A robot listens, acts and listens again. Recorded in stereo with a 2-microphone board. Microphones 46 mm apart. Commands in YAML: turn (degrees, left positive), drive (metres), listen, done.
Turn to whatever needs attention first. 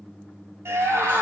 turn: -65
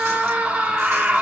turn: -30
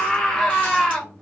turn: 15
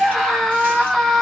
done: "Facing the scream."